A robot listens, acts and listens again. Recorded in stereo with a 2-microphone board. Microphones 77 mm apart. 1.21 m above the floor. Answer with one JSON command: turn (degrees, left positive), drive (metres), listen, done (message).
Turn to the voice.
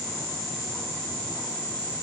{"listen": true}
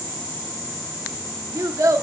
{"turn": -45}
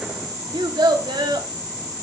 {"turn": -90}
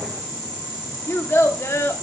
{"turn": 35}
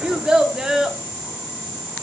{"turn": -10}
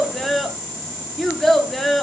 {"done": "Found it: a child speaking, straight ahead."}